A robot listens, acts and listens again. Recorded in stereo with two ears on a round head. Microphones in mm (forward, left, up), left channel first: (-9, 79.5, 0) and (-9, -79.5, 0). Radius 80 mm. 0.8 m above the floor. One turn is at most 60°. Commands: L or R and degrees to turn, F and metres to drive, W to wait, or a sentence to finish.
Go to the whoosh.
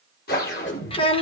L55
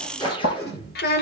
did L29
L25
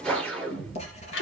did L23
F1.0
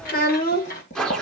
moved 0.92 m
F1.0
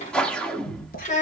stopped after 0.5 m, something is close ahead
I am next to the whoosh.